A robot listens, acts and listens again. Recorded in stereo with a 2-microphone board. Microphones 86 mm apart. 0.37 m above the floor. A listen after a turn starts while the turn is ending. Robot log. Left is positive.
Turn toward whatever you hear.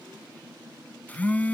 note: The phone buzzing: about 20° left or 160° left.
cmd yaw +20
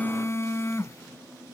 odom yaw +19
note: So it is at 145° left.
cmd yaw +145
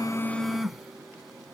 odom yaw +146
end: Facing the phone buzzing.